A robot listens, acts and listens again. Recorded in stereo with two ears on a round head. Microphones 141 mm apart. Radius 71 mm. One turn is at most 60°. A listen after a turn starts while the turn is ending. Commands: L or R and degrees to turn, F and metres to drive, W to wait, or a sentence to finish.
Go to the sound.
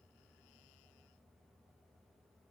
W
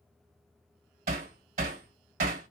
R55
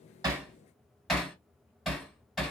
F1.0
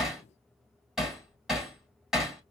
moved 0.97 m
F1.0
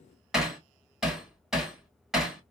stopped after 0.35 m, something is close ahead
I am next to the hammering.